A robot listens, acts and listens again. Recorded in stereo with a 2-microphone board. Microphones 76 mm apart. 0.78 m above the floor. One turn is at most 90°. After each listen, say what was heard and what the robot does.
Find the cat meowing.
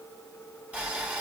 Keep listening.
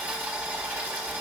Keep listening.
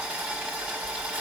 I can't make out a cat meowing to turn to.